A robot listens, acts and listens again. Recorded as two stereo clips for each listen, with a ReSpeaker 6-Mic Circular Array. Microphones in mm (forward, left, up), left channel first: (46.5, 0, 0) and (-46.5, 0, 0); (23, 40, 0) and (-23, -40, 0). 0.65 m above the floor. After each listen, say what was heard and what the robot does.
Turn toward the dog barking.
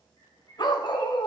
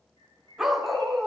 The dog barking: 30° right. Turn 30° right.
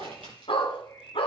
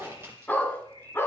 Found it: a dog barking, straight ahead.